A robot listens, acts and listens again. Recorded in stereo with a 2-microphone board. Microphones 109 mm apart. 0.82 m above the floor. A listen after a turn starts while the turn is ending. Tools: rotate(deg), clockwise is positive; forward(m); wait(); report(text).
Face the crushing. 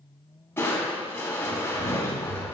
rotate(-20)
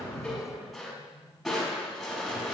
report("Facing the crushing, over 4 m away.")